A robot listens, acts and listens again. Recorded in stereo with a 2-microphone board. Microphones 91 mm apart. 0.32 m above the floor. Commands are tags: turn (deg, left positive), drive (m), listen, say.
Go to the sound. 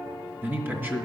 <turn deg="-25"/>
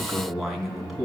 <drive m="1.0"/>
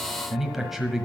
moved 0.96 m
<drive m="1.0"/>
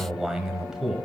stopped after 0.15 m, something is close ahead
<say>I am next to the man speaking.</say>